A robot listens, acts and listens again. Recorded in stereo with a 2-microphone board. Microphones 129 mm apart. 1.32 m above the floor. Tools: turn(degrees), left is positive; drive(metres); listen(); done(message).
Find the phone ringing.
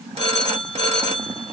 turn(degrees=-50)
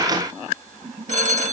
turn(degrees=-80)
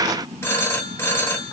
turn(degrees=20)
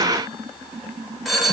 done("Found it: a phone ringing, straight ahead, 1 to 2 m away.")